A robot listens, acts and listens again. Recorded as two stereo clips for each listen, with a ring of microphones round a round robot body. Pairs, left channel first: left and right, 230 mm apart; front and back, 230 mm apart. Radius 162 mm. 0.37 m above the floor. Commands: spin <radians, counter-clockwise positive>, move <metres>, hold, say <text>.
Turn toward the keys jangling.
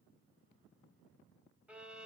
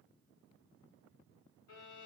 hold
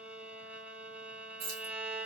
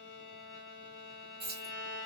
spin -2.01
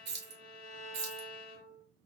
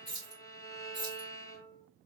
spin -1.22
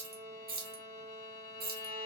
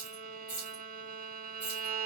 spin -0.79
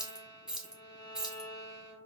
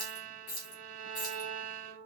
say Found it: keys jangling, straight ahead, 1 to 2 m away.